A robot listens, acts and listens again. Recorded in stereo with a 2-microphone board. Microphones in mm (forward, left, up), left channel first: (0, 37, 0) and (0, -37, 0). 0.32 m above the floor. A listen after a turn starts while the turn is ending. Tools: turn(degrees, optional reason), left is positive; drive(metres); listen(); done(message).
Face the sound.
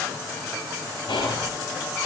turn(degrees=90)
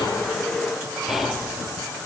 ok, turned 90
done("Facing the whispering.")